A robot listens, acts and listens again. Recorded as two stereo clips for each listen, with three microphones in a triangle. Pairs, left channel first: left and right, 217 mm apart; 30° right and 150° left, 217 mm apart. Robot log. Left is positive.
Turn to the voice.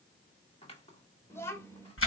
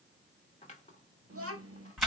note: The child speaking: 170° left.
cmd yaw +170
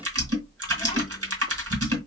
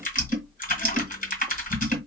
cmd idle
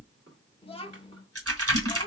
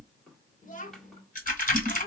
note: The child speaking is now 25° left.
cmd yaw +25
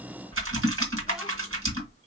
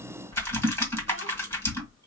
cmd idle
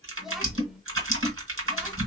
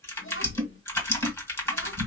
cmd idle
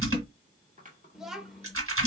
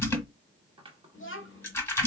end: Facing the child speaking, 1 to 2 m away.